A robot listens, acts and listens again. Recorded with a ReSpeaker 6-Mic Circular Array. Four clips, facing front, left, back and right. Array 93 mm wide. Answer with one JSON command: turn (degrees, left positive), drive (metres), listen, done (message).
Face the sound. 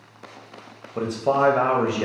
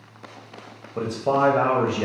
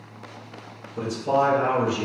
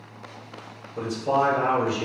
{"turn": 30}
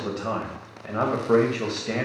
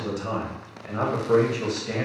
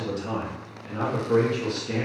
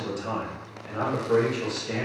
{"turn": 10}
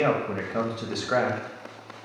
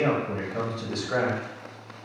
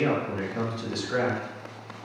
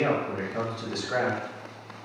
{"done": "Found it: a man speaking, straight ahead."}